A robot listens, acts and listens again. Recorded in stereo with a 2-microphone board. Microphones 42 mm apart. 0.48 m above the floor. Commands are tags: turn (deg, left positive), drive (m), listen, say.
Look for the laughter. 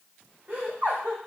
<turn deg="-45"/>
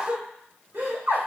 <turn deg="-80"/>
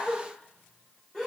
<say>Found it: laughter, straight ahead, 1 to 2 m away.</say>